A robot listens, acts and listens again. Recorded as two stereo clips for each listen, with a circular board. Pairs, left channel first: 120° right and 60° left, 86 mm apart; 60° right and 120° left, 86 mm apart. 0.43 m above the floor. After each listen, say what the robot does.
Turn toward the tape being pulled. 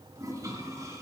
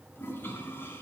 Keep listening.
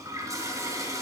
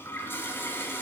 Keep listening.
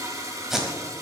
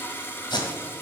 Turn 25° right.
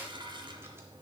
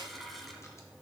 Keep listening.
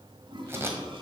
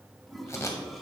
Facing the tape being pulled, 1 to 2 m away.